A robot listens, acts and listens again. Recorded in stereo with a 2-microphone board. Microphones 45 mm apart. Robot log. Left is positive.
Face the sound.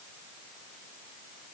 cmd idle
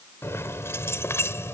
cmd yaw +90
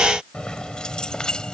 note: So it is at 15° left.
cmd yaw +15
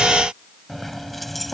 end: Facing the keys jangling.